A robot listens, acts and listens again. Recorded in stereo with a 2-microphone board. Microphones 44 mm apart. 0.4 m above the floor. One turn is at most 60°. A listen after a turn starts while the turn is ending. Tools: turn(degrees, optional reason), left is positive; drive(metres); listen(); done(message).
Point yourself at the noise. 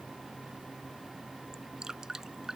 turn(degrees=-30)
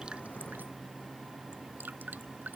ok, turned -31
turn(degrees=-60, reason="So it is at 135° right.")
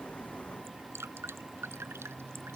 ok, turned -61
turn(degrees=-60, reason="The dripping is now 75° right.")
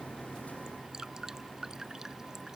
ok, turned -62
turn(degrees=-15, reason="The dripping is now 15° right.")
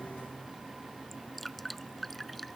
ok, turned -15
done("Found it: dripping, straight ahead.")